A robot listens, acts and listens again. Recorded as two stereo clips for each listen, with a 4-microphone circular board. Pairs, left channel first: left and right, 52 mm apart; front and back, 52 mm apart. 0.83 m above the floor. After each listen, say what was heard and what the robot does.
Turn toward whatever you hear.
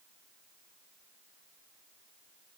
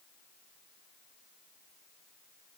Keep listening.
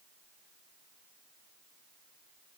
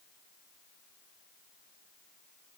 Keep listening.
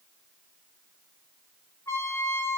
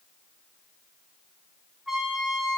The trumpet: 95° left. Turn 95° left.
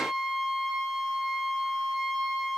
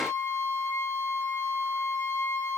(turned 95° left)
Facing the trumpet, 2 to 4 m away.